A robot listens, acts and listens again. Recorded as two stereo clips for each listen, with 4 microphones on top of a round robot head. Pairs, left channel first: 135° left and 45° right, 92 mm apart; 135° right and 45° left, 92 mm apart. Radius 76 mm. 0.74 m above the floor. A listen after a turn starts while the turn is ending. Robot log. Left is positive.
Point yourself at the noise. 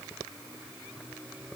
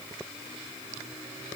cmd idle
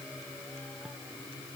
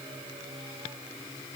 cmd idle
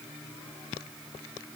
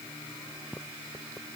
end: I can't make out anything to turn to.